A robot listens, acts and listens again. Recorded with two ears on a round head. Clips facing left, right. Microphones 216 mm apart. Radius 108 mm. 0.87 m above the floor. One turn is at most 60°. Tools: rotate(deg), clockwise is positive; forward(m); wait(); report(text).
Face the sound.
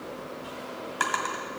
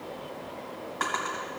rotate(-50)
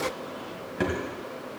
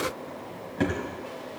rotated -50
report("Facing the drawer.")